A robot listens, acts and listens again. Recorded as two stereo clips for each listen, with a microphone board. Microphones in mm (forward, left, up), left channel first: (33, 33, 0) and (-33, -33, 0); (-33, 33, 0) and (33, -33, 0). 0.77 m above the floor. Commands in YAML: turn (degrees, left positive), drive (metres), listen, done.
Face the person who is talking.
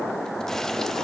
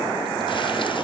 listen: true
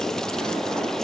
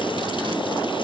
listen: true
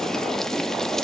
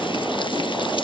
done: "I can't make out anyone speaking to turn to."